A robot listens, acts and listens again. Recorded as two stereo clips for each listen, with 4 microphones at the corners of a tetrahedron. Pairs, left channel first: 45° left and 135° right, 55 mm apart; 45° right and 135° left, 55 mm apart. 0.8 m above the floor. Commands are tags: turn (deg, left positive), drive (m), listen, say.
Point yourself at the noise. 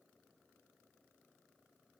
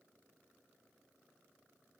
<listen/>
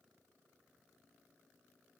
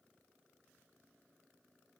<listen/>
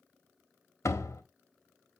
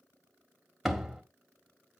<turn deg="45"/>
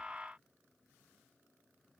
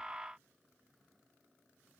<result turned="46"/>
<say>Facing where the door slam came from. I can't hear it now.</say>